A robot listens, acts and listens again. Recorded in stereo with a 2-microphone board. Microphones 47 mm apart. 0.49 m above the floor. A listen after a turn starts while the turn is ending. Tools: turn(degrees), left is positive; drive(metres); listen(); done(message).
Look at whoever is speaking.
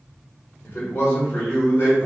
turn(degrees=65)
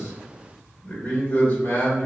turn(degrees=30)
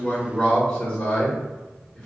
done("Facing the man speaking, 1 to 2 m away.")